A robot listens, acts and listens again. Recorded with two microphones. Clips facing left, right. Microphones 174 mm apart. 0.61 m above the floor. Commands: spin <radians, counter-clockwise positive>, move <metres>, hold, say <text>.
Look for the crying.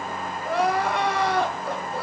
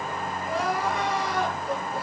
spin 1.22
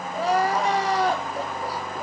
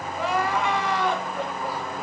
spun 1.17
spin 0.70
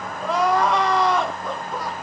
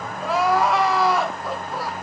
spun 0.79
say Found it: crying, straight ahead.